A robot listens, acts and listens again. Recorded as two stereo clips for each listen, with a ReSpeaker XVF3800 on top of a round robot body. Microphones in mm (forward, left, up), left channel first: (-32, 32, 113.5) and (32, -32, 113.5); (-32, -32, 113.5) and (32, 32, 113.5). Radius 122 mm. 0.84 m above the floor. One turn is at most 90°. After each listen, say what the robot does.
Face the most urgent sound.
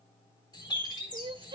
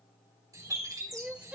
Turn 30° right.
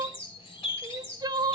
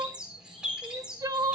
Facing the crying, under 1 m away.